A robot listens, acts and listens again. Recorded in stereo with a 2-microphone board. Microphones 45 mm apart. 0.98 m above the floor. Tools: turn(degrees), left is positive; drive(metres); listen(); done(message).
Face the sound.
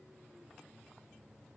listen()
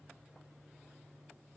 listen()
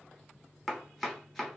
turn(degrees=30)
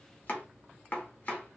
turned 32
turn(degrees=145)
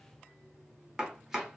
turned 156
turn(degrees=-15)
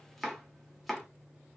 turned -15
done("Facing the chopping.")